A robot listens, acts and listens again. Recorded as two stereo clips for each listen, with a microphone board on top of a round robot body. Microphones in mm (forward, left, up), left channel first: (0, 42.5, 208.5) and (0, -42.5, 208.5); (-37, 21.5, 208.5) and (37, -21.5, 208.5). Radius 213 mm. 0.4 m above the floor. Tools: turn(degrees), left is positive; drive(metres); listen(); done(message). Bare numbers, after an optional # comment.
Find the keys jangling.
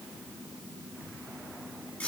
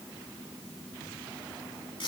listen()
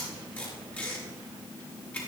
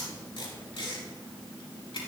listen()
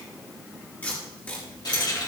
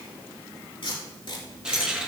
# The keys jangling: 50° left.
turn(50)
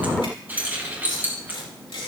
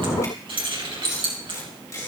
# The keys jangling is now 20° right.
turn(-20)
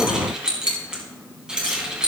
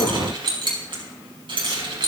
# The keys jangling is now 10° right.
turn(-10)
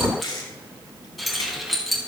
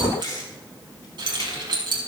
done("Found it: keys jangling, straight ahead.")